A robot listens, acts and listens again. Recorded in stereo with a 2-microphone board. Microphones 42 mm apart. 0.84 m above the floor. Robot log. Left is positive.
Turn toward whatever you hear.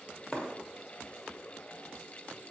note: The breaking glass: about 20° left or 160° left.
cmd yaw +20
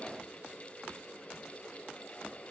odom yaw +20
cmd idle
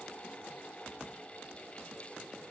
end: I heard breaking glass, but can't make it out now. It was about straight ahead or 140° left.